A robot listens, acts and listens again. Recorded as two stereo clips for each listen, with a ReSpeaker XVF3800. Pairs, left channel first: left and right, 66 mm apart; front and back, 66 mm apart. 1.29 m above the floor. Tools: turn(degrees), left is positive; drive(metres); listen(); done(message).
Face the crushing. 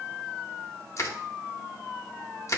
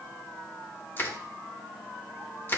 turn(degrees=50)
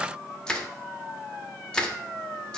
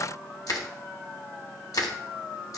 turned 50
turn(degrees=15)
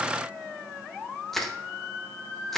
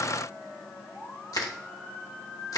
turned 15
done("Facing the crushing, under 1 m away.")